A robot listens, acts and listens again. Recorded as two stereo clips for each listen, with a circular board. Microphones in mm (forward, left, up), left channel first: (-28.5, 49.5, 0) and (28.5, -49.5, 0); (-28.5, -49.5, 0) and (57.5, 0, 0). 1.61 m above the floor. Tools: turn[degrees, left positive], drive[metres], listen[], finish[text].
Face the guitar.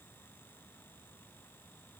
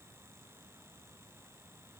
Action: listen[]
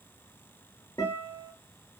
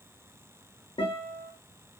Thought: The guitar: straight behind.
Action: turn[180]
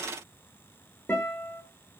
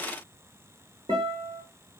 Thought: The guitar is now 50° left.
Action: turn[50]
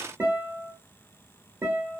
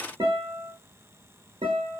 Thought: The guitar is now 15° left.
Action: turn[15]
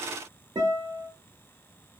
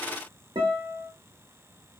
Action: finish[Found it: a guitar, straight ahead, under 1 m away.]